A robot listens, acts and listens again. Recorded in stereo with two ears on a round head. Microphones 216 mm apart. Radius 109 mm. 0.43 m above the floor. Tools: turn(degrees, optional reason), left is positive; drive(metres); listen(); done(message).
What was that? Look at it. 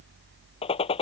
turn(degrees=25, reason="The gunshot: about 25° left or 155° left.")
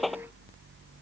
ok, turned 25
done("Found it: a gunshot, straight ahead.")